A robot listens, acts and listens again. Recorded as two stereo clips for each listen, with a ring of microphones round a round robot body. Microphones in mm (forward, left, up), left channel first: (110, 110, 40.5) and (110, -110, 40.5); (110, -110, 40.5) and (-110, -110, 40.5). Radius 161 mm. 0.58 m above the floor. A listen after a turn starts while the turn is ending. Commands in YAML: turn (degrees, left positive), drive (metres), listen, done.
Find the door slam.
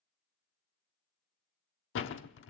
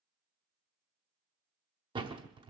turn: 110
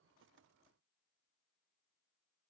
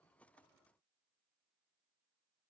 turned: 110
done: "I heard a door slam from this way, but can't make it out now."